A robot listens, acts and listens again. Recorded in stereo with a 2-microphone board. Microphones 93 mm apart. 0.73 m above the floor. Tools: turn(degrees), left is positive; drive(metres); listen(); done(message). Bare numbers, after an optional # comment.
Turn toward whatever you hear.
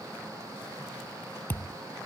# The thud: about 25° left or 155° left.
turn(25)
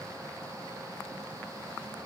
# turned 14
listen()
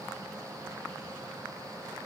done("I heard a thud, but can't make it out now. It was about 10° left or 145° left.")